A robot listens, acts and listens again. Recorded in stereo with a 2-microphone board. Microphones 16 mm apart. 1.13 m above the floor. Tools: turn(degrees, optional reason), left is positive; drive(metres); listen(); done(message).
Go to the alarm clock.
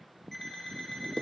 turn(degrees=20, reason="The alarm clock: about 20° left or 160° left.")
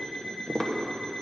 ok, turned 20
turn(degrees=140, reason="So it is at 140° left.")
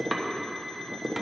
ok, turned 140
listen()
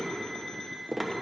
turn(degrees=55, reason="The alarm clock is now 55° left.")
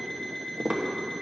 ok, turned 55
turn(degrees=20, reason="The alarm clock is now 20° left.")
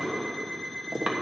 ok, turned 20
drive(metres=1.0)
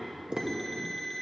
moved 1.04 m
drive(metres=1.0)
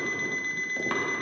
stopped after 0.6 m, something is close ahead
turn(degrees=10, reason="The alarm clock is now 10° left.")
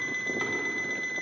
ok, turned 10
done("I am next to the alarm clock.")